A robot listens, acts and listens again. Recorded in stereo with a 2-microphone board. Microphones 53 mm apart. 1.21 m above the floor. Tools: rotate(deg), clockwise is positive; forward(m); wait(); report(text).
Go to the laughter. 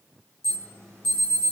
wait()
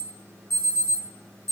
wait()
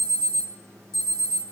report("I can't make out laughter, only an alarm.")